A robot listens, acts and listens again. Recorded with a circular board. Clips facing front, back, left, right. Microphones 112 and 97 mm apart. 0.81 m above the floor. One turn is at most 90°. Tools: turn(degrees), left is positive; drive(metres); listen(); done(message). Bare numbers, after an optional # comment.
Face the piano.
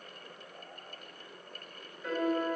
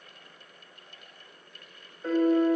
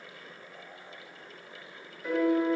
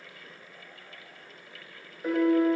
# The piano: 125° right.
turn(-90)
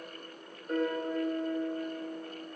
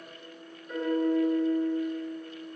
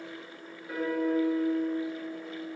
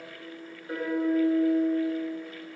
# The piano is now 25° right.
turn(-25)
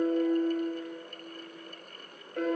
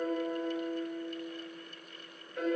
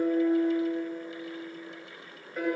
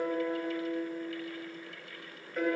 done("Facing the piano, 1 to 2 m away.")